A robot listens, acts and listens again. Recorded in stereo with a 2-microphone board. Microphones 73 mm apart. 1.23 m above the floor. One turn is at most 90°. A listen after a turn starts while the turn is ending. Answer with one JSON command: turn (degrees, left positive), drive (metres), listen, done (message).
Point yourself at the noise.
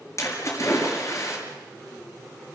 {"turn": 45}
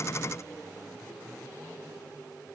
{"listen": true}
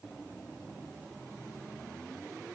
{"done": "I heard a splash, but can't make it out now. It was about straight ahead or 90° left."}